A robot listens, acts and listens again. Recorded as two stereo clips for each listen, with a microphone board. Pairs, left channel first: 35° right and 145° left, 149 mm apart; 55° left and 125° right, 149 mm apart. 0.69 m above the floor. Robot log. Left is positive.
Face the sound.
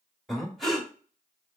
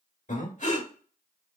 note: The breathing: 55° left.
cmd yaw +55
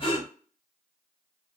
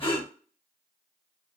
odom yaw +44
note: The breathing is now 10° left.
cmd yaw +10
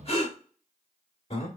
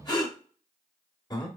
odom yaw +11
end: Facing the breathing.